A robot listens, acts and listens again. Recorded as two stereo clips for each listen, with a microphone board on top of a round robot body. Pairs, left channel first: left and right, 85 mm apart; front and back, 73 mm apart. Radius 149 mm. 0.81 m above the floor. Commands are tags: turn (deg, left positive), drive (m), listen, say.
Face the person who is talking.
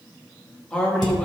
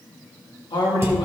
<turn deg="10"/>
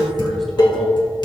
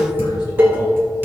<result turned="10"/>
<listen/>
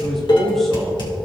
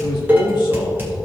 <say>Found it: a man speaking, straight ahead, 1 to 2 m away.</say>